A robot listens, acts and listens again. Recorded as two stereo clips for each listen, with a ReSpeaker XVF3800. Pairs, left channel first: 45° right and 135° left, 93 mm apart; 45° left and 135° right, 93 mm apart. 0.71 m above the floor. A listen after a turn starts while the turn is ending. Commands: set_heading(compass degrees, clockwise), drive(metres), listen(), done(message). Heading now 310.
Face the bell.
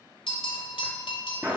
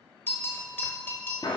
set_heading(330)
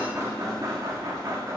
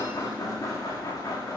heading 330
listen()
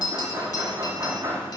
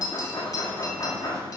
done("Facing the bell.")